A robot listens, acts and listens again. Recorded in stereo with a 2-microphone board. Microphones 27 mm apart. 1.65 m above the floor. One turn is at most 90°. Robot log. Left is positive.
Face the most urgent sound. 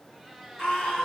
note: The scream: about 30° left or 150° left.
cmd yaw +30
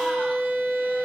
cmd idle
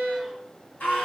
note: So it is at 120° left.
cmd yaw +90
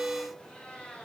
note: Nothing new. It was at 30° left.
cmd yaw +30
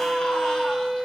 cmd idle
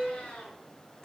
note: The scream is now 20° left.
cmd yaw +20
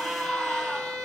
end: Facing the scream.